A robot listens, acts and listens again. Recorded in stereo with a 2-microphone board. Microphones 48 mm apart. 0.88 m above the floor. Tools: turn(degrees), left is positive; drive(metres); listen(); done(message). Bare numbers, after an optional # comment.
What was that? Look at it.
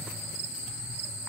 listen()
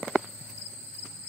listen()
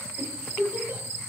# The giggle: about 40° right or 140° right.
turn(-40)
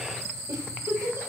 # So it is at 100° right.
turn(-100)
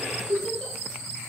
# The giggle is now 15° left.
turn(15)
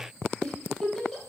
done("Found it: a giggle, straight ahead, 2 to 4 m away.")